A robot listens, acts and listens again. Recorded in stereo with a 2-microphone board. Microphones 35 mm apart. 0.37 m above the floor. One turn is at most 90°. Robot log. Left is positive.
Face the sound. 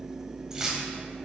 note: The keys jangling: about 20° right or 160° right.
cmd yaw -20
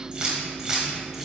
cmd yaw -30
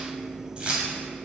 note: The keys jangling: about 30° right or 150° right.
cmd yaw -30
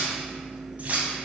note: So it is at 140° right.
cmd yaw -90
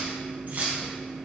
note: The keys jangling is now 55° right.
cmd yaw -55
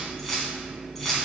note: The keys jangling is now 10° left.
cmd yaw +10
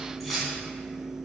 end: Facing the keys jangling, 2 to 4 m away.